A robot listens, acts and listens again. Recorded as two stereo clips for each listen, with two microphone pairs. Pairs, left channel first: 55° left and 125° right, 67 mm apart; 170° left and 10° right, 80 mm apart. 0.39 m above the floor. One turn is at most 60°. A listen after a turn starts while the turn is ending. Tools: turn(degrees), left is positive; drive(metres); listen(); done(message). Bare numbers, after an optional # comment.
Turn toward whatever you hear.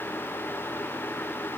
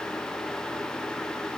listen()
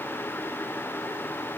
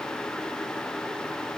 listen()
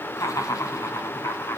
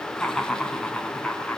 # The laughter: 90° left.
turn(60)
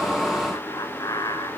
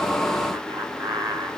# The laughter is now 35° left.
turn(35)
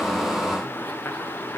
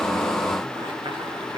listen()
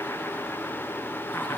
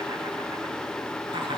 # The laughter is now 10° right.
turn(-10)
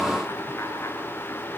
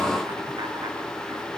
listen()
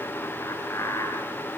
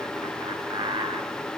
done("Facing the laughter, over 4 m away.")